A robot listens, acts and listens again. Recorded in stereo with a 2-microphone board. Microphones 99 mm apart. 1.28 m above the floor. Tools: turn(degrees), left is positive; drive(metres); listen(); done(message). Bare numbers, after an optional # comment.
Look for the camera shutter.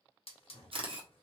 # The camera shutter: about 65° right or 115° right.
turn(-65)
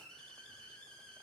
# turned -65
listen()
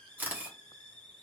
# So it is at 20° right.
turn(-20)
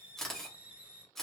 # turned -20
done("Found it: a camera shutter, straight ahead.")